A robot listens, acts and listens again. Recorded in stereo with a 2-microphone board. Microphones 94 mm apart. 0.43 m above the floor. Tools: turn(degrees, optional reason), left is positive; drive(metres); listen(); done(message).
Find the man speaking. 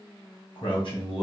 turn(degrees=65, reason="The man speaking: about 65° left or 115° left.")
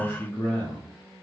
turn(degrees=20, reason="So it is at 20° left.")
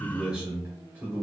turn(degrees=-25, reason="The man speaking is now 25° right.")
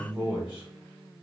turn(degrees=-20, reason="The man speaking is now 20° right.")
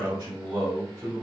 turn(degrees=-30, reason="The man speaking is now 30° right.")
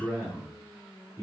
turn(degrees=-10, reason="The man speaking is now 10° right.")
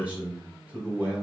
done("Found it: a man speaking, straight ahead, 1 to 2 m away.")